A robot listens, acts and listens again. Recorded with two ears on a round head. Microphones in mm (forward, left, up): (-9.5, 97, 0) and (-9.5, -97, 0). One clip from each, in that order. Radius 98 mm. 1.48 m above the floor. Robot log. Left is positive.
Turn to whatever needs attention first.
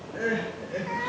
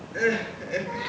note: The crying: about 50° right or 130° right.
cmd yaw -50
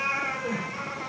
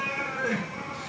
note: So it is at 75° right.
cmd yaw -75
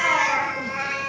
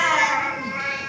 note: The crying is now 20° right.
cmd yaw -20
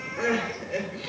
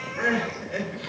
end: Found it: crying, straight ahead, 2 to 4 m away.